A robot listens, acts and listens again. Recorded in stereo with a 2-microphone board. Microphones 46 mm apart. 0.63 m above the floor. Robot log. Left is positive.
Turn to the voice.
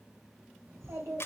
cmd yaw -90
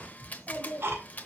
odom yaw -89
note: So it is at 10° left.
cmd yaw +10
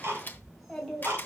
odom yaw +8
end: Found it: a child speaking, straight ahead.